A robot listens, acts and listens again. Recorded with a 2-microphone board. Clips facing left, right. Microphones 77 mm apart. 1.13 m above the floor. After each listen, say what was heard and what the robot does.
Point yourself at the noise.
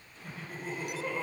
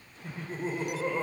The laughter: about 35° right or 145° right. Turn 35° right.
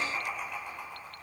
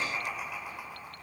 So it is at 10° right. Turn 10° right.
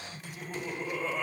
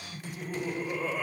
Found it: laughter, straight ahead, over 4 m away.